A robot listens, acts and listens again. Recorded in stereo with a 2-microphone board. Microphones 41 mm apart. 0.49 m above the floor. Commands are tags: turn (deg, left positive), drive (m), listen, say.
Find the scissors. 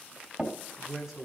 <listen/>
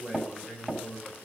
<listen/>
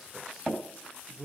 <say>I can't make out scissors to turn to.</say>